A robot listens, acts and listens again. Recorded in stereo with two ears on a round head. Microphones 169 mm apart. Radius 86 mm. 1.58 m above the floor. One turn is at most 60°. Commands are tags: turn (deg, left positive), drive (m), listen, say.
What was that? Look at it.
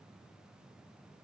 <listen/>
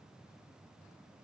<listen/>
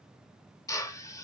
<turn deg="20"/>
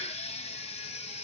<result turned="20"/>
<listen/>
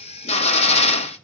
<turn deg="60"/>
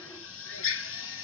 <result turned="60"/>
<turn deg="60"/>
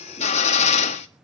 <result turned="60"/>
<turn deg="35"/>
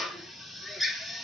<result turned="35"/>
<say>Found it: a drill, straight ahead, 1 to 2 m away.</say>